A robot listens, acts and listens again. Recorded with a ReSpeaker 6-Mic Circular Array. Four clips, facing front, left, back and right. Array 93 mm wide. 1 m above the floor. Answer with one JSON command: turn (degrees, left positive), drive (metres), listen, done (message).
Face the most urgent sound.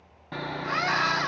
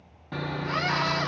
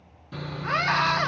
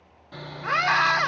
{"turn": -115}
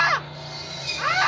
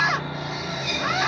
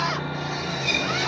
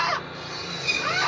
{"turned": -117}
{"done": "Found it: a scream, straight ahead, 1 to 2 m away."}